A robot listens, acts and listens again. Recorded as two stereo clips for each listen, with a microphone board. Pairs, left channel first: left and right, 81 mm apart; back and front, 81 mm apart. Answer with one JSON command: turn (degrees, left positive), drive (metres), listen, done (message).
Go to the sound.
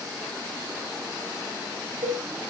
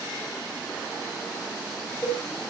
{"turn": -105}
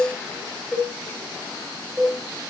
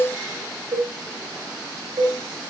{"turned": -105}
{"drive": 1.0}
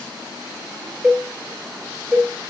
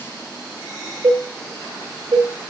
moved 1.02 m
{"drive": 1.0}
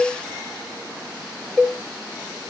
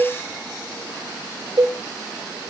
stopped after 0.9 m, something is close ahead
{"turn": 15}
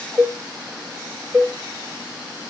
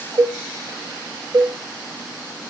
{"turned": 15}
{"done": "I am next to the cowbell."}